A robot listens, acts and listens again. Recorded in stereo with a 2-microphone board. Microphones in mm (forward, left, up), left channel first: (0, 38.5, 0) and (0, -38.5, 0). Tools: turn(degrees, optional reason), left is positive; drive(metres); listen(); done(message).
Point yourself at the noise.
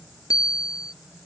turn(degrees=55, reason="The bicycle bell: about 55° left or 125° left.")
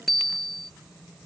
done("Found it: a bicycle bell, straight ahead.")